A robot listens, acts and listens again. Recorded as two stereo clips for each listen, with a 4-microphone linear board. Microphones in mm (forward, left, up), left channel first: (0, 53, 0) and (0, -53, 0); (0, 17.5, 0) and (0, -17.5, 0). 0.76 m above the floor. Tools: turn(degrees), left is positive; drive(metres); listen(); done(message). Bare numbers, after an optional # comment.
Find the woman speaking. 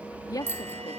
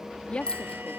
# The woman speaking: about 35° left or 145° left.
turn(35)
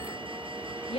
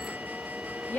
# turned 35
# So it is at 105° left.
turn(105)
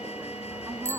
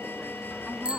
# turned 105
listen()
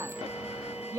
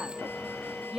# The woman speaking is now 35° right.
turn(-35)
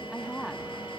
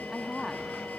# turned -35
done("Facing the woman speaking.")